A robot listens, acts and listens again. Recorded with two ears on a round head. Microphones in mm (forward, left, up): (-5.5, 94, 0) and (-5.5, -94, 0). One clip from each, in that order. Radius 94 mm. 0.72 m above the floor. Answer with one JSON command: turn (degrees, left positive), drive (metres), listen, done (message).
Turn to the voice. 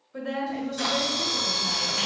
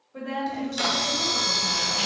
{"turn": 65}
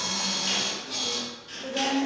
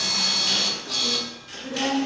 {"turn": 20}
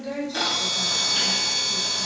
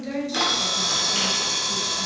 {"done": "Facing the woman speaking."}